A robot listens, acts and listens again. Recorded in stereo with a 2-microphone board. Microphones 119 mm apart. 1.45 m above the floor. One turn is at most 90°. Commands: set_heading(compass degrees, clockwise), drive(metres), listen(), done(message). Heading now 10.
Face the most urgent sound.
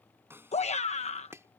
set_heading(300)
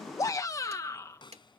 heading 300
set_heading(270)
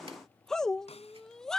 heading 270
done("Facing the shout.")